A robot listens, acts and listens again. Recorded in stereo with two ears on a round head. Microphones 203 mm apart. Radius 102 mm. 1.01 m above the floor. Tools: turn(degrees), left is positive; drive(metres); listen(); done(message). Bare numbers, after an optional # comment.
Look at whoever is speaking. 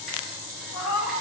listen()
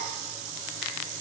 listen()
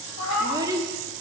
# The child speaking: about 15° right or 165° right.
turn(-15)
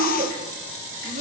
# So it is at 150° right.
turn(-150)
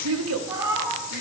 # The child speaking is now 70° right.
turn(-70)
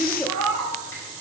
done("Facing the child speaking.")